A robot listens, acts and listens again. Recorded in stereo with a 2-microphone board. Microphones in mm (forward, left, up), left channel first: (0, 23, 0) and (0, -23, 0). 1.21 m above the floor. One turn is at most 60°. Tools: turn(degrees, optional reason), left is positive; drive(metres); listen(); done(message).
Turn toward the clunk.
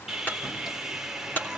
turn(degrees=50, reason="The clunk: about 50° left or 130° left.")
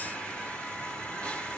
listen()
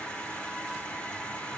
done("I heard a clunk, but can't make it out now. It was about straight ahead or 80° left.")